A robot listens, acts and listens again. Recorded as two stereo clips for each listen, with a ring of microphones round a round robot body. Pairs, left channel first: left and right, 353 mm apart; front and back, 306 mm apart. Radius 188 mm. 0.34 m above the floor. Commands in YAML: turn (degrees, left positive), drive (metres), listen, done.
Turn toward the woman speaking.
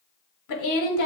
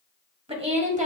turn: 115
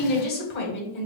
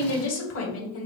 turn: 35
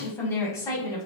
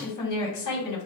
turn: 10
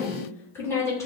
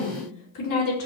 turn: 10
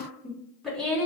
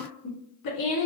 done: "Found it: a woman speaking, straight ahead, 2 to 4 m away."